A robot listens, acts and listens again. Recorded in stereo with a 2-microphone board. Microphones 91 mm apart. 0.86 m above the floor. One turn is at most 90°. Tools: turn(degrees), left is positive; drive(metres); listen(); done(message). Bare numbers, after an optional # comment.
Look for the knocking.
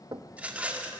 # The knocking: about 45° right or 135° right.
turn(-45)
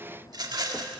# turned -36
listen()
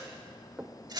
# So it is at 20° right.
turn(-20)
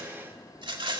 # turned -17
listen()
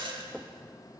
done("Facing the knocking, under 1 m away.")